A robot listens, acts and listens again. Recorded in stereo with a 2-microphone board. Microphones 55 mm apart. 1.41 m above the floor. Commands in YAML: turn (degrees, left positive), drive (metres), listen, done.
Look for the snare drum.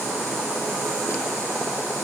listen: true
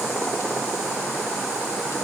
listen: true
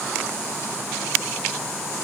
done: "I can't make out a snare drum."